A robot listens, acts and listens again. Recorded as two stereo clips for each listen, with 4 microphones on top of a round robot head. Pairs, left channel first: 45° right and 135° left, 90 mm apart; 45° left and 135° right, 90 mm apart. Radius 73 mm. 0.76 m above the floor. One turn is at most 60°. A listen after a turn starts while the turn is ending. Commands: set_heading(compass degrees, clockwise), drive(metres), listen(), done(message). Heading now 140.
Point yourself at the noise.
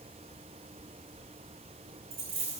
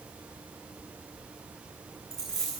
set_heading(80)
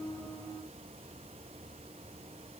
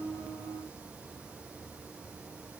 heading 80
set_heading(20)
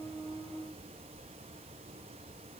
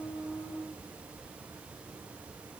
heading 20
done("Facing where the dropped coin came from. I can't hear it now.")